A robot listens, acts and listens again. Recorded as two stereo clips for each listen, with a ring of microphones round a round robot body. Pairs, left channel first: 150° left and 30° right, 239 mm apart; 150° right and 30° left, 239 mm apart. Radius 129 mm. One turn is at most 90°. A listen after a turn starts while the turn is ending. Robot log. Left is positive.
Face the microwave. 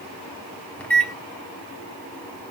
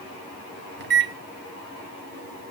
note: The microwave: 65° left.
cmd yaw +65
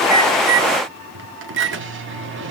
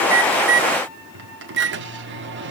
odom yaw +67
end: Facing the microwave.